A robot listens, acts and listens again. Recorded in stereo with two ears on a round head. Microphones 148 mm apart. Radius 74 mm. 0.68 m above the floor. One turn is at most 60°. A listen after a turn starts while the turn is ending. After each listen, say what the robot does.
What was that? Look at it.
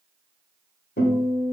Turn 60° left.
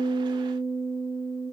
Turn 10° left.
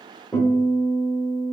Found it: a guitar, straight ahead.